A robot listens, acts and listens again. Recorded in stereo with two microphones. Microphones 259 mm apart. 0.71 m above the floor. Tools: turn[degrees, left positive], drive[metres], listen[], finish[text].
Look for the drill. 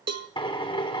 Thought: The drill: about 20° left or 160° left.
Action: turn[20]
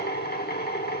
Thought: So it is at 140° left.
Action: turn[140]
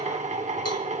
Thought: The drill is now 30° right.
Action: turn[-30]
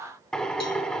Action: finish[Facing the drill.]